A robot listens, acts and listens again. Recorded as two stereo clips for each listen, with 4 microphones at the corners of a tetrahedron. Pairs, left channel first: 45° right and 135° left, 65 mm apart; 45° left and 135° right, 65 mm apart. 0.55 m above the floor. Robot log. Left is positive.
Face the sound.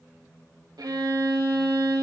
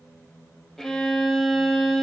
note: The violin: 130° left.
cmd yaw +130
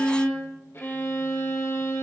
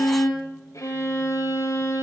note: The violin is now 10° left.
cmd yaw +10
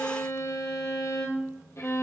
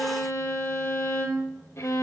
end: Facing the violin, 2 to 4 m away.